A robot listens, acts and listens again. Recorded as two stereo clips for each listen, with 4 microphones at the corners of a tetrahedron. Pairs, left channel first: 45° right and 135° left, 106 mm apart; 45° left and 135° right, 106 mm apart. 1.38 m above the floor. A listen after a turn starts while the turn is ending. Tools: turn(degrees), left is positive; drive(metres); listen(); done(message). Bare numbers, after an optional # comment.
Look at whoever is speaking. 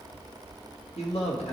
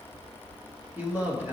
# The man speaking: 65° right.
turn(-65)
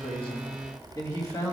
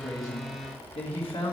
# The man speaking is now 10° left.
turn(10)
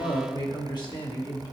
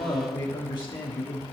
done("Found it: a man speaking, straight ahead.")